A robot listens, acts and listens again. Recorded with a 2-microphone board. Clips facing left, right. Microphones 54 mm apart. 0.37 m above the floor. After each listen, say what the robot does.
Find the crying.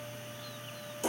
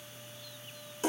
Keep listening.
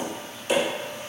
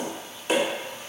Keep listening.
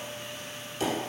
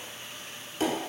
I can't make out crying to turn to.